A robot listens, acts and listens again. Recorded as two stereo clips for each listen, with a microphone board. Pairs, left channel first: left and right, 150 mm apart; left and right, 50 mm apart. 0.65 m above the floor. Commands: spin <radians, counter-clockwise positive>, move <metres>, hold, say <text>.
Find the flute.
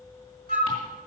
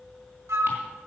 spin -1.57
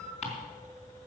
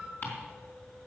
hold
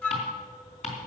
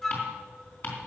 spin 0.17
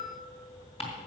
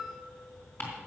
hold
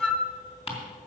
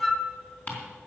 say Found it: a flute, straight ahead.